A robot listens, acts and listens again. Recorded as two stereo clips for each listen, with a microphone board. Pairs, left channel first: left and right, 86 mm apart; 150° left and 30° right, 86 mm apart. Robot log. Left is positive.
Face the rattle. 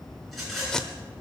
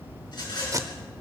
note: The rattle: straight behind.
cmd yaw +180
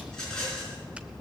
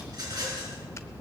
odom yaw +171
end: Found it: a rattle, straight ahead.